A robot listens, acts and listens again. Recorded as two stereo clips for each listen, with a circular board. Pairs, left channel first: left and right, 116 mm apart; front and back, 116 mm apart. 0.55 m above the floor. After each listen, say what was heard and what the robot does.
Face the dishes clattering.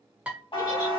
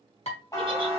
The dishes clattering: 10° right. Turn 10° right.
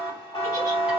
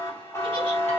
Keep listening.
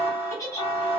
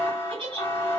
Keep listening.
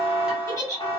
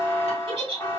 Facing where the dishes clattering came from. I can't hear it now.